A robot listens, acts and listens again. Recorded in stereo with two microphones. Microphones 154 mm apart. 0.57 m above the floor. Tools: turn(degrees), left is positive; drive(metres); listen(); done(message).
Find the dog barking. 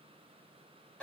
listen()
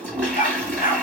turn(degrees=60)
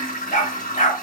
turn(degrees=55)
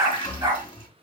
turn(degrees=-20)
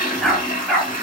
done("Found it: a dog barking, straight ahead.")